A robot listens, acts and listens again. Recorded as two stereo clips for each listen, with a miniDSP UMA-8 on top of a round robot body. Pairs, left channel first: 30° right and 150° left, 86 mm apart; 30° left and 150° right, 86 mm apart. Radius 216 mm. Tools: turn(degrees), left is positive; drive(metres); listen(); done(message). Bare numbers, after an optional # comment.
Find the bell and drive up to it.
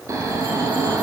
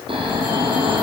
listen()
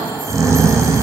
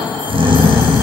listen()
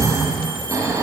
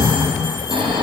done("I can't make out a bell, only snoring.")